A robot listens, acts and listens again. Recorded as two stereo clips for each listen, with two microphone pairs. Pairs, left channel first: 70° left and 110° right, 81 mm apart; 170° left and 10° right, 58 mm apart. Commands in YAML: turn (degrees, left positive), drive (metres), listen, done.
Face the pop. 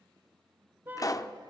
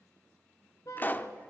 turn: 115
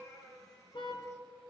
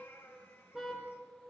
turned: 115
done: "I heard a pop from this way, but can't make it out now."